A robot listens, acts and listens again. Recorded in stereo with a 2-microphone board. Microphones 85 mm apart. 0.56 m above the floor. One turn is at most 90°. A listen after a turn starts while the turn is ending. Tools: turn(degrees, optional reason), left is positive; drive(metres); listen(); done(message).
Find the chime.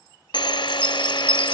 turn(degrees=30)
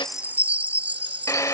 turn(degrees=-20, reason="So it is at 20° right.")
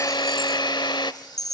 done("Found it: a chime, straight ahead.")